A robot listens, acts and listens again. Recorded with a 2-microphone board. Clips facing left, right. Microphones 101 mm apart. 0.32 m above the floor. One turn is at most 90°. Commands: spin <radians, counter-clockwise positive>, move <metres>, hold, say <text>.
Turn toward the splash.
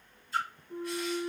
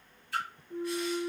spin -1.57
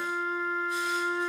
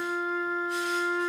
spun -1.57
say Facing where the splash came from. I can't hear it now.